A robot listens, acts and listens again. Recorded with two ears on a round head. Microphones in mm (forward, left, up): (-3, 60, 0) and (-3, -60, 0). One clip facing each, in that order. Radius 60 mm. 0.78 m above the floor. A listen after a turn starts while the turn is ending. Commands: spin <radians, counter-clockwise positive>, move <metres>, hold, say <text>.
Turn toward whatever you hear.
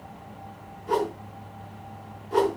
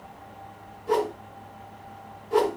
spin -0.52
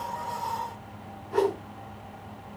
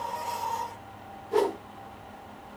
spin -2.53
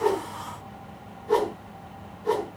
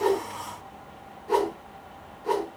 spin -0.26
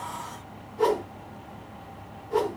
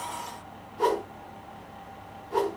say Facing the whoosh.